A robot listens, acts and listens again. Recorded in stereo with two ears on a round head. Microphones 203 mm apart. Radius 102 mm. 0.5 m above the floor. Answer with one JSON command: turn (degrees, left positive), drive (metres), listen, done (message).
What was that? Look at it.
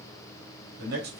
{"turn": -45}
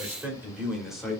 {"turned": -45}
{"done": "Found it: a man speaking, straight ahead."}